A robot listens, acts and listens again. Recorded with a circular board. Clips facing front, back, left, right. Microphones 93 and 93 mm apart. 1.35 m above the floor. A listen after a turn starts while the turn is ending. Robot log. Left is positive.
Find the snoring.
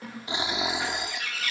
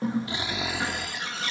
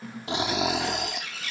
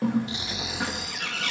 note: The snoring: 70° left.
cmd yaw +70
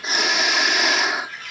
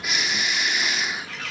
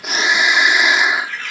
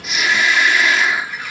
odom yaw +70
note: The snoring is now 20° left.
cmd yaw +20
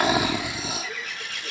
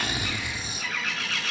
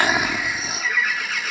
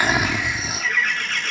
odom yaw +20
end: Found it: snoring, straight ahead.